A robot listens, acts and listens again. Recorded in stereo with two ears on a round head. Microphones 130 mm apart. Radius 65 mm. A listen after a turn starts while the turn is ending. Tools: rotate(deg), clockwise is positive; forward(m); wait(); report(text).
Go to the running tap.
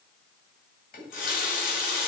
rotate(-65)
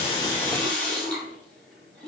rotate(-10)
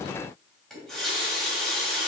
forward(1.0)
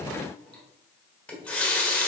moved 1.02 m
rotate(-10)
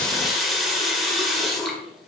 forward(1.0)
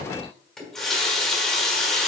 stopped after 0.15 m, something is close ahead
report("Arrived at the running tap, straight ahead.")